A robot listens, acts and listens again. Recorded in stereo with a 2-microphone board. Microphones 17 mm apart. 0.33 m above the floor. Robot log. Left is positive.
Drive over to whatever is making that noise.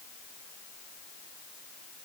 cmd idle
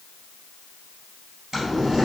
note: The boiling: about 25° right or 155° right.
cmd yaw -25
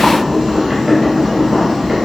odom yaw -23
note: So it is at 130° right.
cmd yaw -130
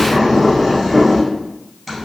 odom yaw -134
cmd fwd 1.0
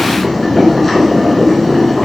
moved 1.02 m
note: The boiling is now 10° left.
cmd yaw +10
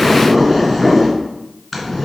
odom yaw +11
cmd fwd 1.0
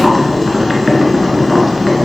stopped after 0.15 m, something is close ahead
end: I am next to the boiling.